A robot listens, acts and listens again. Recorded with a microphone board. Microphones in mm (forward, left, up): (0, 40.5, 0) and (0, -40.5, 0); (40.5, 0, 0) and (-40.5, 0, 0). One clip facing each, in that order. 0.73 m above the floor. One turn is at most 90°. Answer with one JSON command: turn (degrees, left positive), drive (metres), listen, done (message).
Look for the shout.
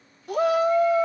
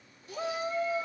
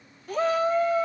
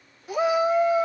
{"turn": 90}
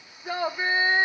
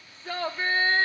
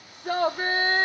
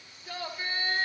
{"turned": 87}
{"turn": 15}
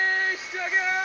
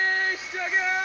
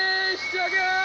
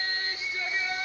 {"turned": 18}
{"done": "Facing the shout."}